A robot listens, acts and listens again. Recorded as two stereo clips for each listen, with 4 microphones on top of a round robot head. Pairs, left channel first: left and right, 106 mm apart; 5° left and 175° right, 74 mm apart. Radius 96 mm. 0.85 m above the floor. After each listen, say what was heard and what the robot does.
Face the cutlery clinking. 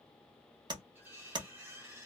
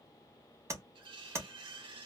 The cutlery clinking: 165° right. Turn 165° right.
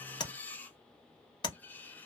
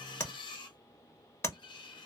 The cutlery clinking is now 15° left. Turn 15° left.
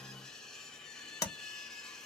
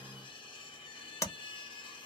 Facing the cutlery clinking.